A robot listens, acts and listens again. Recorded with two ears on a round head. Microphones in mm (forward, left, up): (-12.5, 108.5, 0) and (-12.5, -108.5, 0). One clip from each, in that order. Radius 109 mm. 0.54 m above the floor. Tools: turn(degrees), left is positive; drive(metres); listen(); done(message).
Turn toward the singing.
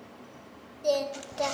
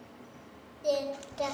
turn(degrees=30)
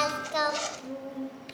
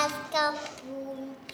turn(degrees=-20)
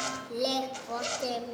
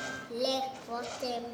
done("Facing the singing, 2 to 4 m away.")